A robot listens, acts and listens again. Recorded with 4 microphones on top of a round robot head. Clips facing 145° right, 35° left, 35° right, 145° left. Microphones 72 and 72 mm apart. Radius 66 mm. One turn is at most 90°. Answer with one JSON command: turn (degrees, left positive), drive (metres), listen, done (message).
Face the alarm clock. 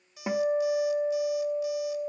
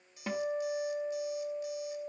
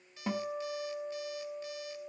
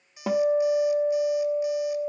{"turn": -90}
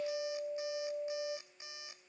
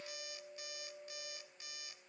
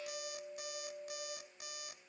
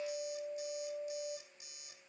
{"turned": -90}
{"turn": -75}
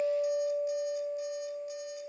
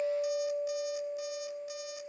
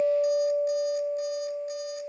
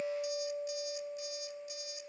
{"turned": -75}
{"listen": true}
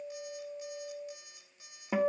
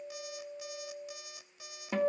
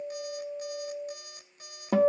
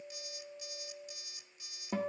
{"turn": 15}
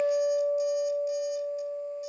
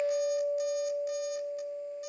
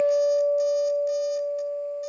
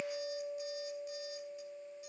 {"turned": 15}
{"listen": true}
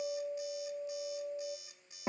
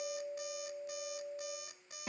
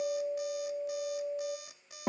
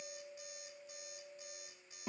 {"done": "Found it: an alarm clock, straight ahead."}